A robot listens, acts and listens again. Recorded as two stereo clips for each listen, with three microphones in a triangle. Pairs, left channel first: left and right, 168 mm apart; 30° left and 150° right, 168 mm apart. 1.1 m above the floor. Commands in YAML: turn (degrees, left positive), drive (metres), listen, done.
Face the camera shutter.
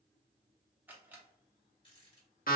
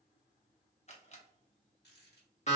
turn: -15
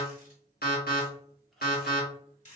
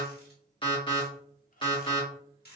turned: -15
listen: true
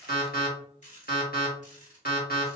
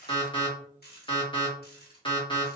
listen: true
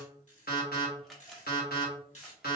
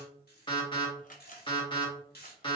done: "Found it: a camera shutter, straight ahead."